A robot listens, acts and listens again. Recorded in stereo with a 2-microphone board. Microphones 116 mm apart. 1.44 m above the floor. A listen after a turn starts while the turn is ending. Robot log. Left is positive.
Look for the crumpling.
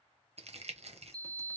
note: The crumpling: about 65° right or 115° right.
cmd yaw -65
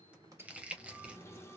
note: So it is at 10° right.
cmd yaw -10
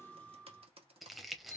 end: Found it: crumpling, straight ahead.